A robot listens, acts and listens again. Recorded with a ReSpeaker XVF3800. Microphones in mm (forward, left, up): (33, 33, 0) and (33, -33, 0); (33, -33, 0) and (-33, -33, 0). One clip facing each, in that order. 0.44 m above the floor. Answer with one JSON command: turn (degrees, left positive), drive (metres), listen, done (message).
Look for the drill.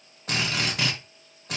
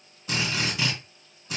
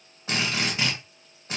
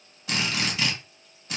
{"turn": 55}
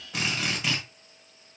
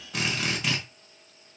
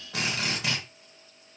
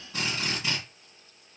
{"done": "Facing the drill."}